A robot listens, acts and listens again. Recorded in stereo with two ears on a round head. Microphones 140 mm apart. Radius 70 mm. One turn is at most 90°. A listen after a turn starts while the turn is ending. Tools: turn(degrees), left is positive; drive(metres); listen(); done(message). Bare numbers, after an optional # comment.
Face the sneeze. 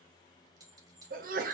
# The sneeze: about 60° right or 120° right.
turn(-60)
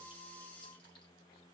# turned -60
listen()
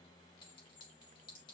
done("I heard a sneeze, but can't make it out now. It was about straight ahead or 60° right.")